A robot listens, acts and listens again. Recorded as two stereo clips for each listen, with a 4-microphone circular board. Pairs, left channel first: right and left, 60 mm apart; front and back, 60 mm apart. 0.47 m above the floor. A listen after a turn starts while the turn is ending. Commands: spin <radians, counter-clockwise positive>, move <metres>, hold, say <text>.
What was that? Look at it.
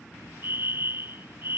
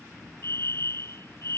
spin 0.70
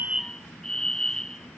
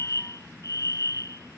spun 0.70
spin -0.17
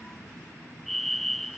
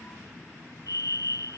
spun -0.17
say Facing the fire alarm.